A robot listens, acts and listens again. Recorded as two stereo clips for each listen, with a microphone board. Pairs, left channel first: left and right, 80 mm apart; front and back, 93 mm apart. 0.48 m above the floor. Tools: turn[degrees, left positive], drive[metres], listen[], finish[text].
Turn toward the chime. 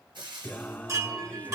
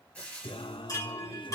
Thought: The chime: 45° right.
Action: turn[-45]
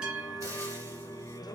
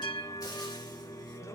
Thought: The chime is now 10° right.
Action: turn[-10]
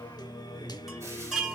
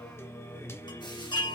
Action: finish[Found it: a chime, straight ahead, 2 to 4 m away.]